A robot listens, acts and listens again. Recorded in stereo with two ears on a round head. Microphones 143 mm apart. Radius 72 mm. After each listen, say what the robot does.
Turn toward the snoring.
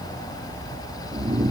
Turn 25° right.
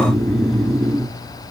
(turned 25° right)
Found it: snoring, straight ahead, under 1 m away.